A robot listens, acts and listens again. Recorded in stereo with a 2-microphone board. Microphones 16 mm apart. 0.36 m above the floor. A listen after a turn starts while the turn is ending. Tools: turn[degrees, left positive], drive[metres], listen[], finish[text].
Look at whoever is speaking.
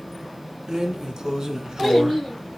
Action: turn[-30]
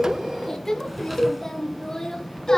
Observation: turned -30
Thought: So it is at 25° left.
Action: turn[25]
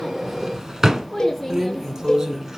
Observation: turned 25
Action: finish[Facing the child speaking, 2 to 4 m away.]